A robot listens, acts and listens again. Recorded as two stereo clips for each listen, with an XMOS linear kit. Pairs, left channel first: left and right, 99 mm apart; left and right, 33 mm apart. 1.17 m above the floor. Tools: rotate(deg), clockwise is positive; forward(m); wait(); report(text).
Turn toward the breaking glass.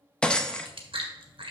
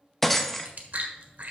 rotate(-30)
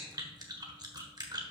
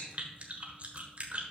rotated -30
wait()
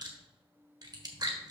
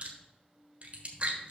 report("I heard breaking glass, but can't make it out now. It was about 20° right or 140° left.")